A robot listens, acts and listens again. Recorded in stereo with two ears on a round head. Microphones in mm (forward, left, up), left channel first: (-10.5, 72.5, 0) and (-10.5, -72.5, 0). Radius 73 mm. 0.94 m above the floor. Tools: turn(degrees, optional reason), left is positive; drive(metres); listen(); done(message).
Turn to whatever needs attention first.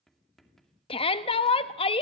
turn(degrees=35, reason="The shout: about 35° left or 145° left.")
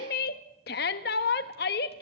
turn(degrees=105, reason="So it is at 105° left.")
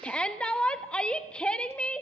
done("Found it: a shout, straight ahead.")